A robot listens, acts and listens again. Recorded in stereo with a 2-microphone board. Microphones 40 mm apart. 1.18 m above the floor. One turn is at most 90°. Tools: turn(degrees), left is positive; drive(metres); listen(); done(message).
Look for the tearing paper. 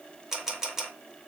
listen()
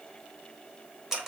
listen()
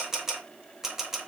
done("I can't make out tearing paper to turn to.")